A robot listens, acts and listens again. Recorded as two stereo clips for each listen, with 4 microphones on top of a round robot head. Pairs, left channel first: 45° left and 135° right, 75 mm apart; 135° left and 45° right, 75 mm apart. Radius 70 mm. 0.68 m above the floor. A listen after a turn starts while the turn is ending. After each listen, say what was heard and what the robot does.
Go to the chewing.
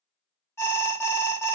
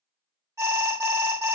Keep listening.
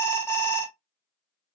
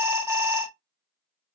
Keep listening.
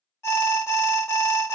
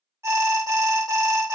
I can't make out chewing, only an alarm.